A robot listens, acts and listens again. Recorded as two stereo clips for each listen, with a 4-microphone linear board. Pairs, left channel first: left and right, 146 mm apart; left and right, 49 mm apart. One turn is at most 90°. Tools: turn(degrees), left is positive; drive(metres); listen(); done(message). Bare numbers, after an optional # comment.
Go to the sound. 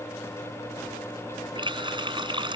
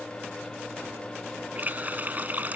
# The running tap: about 35° right or 145° right.
turn(-35)
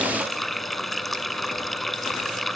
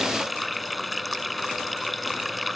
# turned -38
drive(1.0)
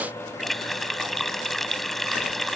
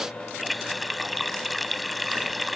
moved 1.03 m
drive(1.0)
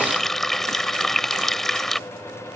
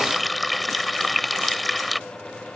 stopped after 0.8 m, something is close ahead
done("Arrived at the running tap, straight ahead.")